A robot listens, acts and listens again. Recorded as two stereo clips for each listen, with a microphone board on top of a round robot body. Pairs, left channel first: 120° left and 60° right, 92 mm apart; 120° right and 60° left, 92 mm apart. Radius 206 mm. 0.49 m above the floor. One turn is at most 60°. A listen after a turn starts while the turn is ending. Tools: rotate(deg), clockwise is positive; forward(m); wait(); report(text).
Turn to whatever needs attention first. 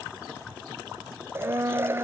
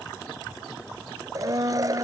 wait()
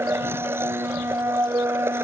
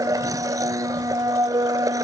wait()
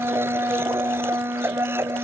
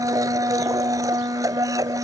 report("I can't make out anything urgent, only a blender.")